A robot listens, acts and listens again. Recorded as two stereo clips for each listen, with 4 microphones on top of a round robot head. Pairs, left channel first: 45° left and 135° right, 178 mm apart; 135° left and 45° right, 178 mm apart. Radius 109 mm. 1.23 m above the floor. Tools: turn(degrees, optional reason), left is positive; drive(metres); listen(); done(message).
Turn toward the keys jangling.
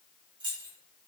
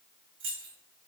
turn(degrees=-65, reason="The keys jangling: 65° right.")
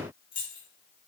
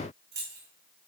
turn(degrees=-15, reason="The keys jangling is now 15° right.")
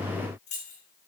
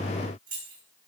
done("Facing the keys jangling.")